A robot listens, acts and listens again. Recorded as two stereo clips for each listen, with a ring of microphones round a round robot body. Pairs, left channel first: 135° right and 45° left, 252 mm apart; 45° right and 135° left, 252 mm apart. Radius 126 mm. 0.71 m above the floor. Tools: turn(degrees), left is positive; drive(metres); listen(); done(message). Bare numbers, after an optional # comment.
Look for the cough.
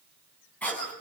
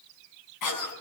# The cough: 50° right.
turn(-50)
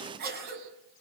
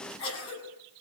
# The cough is now 10° right.
turn(-10)
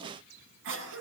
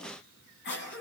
done("Facing the cough.")